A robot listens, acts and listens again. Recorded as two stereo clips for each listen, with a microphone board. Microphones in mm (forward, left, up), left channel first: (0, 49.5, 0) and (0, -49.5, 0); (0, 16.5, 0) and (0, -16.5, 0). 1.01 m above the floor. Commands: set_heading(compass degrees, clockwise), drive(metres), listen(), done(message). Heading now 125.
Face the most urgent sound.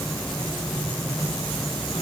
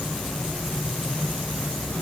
listen()
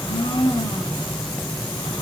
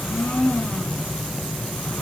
listen()
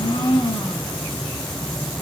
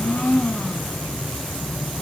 done("I can't make out anything urgent, only a blender.")